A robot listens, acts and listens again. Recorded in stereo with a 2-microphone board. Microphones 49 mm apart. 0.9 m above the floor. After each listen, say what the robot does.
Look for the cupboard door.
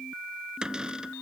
Turn 15° right.
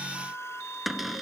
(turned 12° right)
Found it: a cupboard door, straight ahead.